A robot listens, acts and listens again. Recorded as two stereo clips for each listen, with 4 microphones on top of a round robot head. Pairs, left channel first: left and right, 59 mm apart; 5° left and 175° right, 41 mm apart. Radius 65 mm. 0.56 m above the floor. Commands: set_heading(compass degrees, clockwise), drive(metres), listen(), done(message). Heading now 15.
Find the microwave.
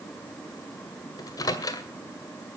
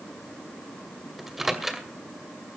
set_heading(270)
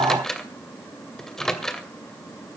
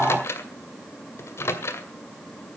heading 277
done("Found it: a microwave, straight ahead, 2 to 4 m away.")